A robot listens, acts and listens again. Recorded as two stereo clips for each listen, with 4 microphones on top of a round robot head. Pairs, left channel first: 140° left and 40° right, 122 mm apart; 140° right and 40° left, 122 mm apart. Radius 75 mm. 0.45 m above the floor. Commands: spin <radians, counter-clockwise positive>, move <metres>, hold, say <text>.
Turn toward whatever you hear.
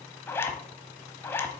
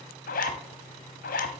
spin -2.53
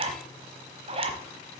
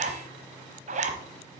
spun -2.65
say Found it: a zipper, straight ahead, 1 to 2 m away.